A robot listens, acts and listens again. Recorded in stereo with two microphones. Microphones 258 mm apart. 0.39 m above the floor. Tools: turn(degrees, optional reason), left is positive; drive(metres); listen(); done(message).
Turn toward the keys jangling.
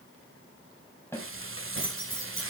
turn(degrees=50, reason="The keys jangling: about 50° left or 130° left.")
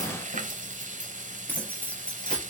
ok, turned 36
done("Facing the keys jangling, over 4 m away.")